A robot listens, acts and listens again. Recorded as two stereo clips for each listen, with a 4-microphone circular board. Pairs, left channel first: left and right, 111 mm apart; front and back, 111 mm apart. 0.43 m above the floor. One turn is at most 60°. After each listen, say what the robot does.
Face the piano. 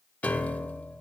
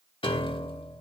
Turn 15° left.
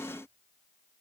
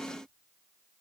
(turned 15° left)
Keep listening.
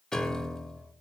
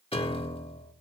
Found it: a piano, straight ahead, under 1 m away.